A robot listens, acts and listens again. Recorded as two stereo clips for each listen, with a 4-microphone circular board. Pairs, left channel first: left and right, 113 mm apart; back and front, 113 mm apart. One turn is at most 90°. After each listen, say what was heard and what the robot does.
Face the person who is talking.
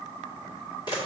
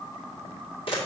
Keep listening.
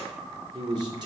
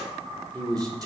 The man speaking: 50° right. Turn 50° right.
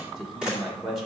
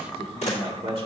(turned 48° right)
Found it: a man speaking, straight ahead.